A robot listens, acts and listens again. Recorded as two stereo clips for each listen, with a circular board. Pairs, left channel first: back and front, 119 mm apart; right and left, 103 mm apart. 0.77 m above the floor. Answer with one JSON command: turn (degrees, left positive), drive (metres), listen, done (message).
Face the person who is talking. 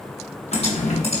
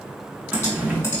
{"listen": true}
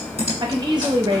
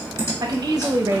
{"turn": 45}
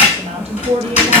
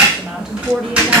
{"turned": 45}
{"turn": 10}
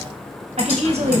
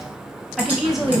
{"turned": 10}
{"done": "Facing the woman speaking."}